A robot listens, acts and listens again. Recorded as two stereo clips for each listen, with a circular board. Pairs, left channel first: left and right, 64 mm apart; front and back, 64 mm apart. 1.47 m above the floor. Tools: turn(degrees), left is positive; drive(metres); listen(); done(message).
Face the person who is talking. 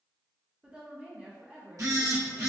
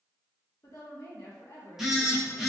turn(degrees=-20)
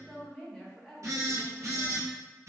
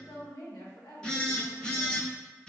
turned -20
done("Facing the woman speaking, 1 to 2 m away.")